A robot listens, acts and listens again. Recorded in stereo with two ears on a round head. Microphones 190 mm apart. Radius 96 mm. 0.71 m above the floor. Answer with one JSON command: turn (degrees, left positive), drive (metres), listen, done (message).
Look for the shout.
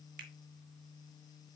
{"listen": true}
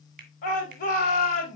{"turn": 40}
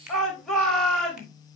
{"done": "Facing the shout."}